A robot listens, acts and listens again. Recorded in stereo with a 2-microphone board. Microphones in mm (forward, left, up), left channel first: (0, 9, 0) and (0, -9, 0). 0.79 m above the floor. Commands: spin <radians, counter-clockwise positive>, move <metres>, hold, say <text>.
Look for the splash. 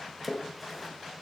spin -0.52
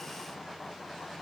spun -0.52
hold
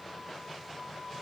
say I heard a splash, but can't make it out now. It was about 20° left or 140° right.